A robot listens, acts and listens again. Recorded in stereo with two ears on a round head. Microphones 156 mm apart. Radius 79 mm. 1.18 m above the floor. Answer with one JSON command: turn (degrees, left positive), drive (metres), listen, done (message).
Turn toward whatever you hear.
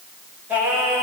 {"turn": -30}
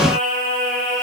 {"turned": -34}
{"turn": -130}
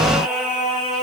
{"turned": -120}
{"done": "Found it: singing, straight ahead."}